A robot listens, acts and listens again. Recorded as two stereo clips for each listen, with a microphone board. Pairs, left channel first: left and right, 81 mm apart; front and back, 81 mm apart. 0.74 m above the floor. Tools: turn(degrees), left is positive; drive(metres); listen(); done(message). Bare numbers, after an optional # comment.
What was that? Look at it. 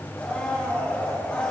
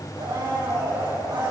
# The blender: 165° left.
turn(165)
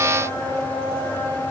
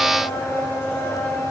# The blender is now 60° left.
turn(60)
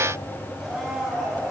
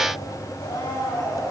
done("Found it: a blender, straight ahead, 2 to 4 m away.")